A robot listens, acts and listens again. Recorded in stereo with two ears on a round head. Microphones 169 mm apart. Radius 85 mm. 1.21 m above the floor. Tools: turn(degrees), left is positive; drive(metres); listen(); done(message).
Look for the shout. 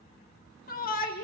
turn(degrees=50)
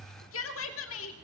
turn(degrees=80)
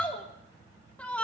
done("Found it: a shout, straight ahead.")